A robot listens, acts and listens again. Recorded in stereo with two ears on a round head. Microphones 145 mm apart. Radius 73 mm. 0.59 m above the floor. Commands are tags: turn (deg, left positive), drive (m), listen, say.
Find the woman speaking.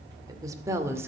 <turn deg="-15"/>
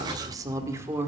<turn deg="-30"/>
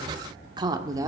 <turn deg="-20"/>
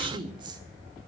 <turn deg="-25"/>
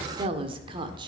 <turn deg="-30"/>
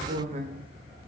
<turn deg="-135"/>
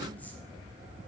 <listen/>
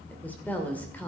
<turn deg="10"/>
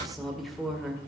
<say>Found it: a woman speaking, straight ahead, 2 to 4 m away.</say>